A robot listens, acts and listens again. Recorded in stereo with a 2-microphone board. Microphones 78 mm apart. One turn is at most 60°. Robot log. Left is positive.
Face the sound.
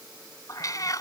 note: The cat meowing: about 50° left or 130° left.
cmd yaw +50
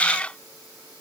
note: So it is at 15° left.
cmd yaw +15
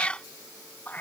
note: The cat meowing is now 25° left.
cmd yaw +25
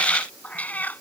note: The cat meowing is now 25° left.
cmd yaw +25
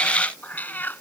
note: The cat meowing is now 25° left.
cmd yaw +25
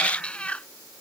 note: The cat meowing is now 15° left.
cmd yaw +15
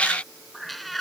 end: Facing the cat meowing.